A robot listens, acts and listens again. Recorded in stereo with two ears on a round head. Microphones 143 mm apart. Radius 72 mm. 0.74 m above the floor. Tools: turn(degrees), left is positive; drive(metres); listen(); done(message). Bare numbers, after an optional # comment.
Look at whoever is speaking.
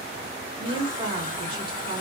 # The woman speaking: about 30° right or 150° right.
turn(-30)
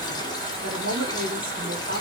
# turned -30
# So it is at 115° right.
turn(-115)
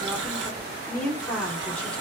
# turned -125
# The woman speaking is now 10° left.
turn(10)
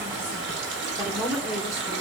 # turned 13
done("Facing the woman speaking.")